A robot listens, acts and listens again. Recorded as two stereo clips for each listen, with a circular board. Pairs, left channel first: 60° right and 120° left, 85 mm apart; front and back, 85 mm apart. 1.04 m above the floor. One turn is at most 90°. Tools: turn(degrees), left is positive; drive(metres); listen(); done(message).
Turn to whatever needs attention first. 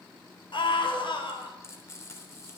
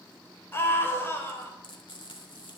turn(degrees=-65)
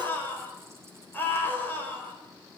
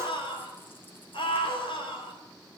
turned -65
done("Facing the scream, over 4 m away.")